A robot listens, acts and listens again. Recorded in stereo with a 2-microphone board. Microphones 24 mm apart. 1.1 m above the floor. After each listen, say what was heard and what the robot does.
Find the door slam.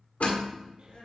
Turn 90° left.
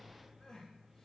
Facing where the door slam came from. I can't hear it now.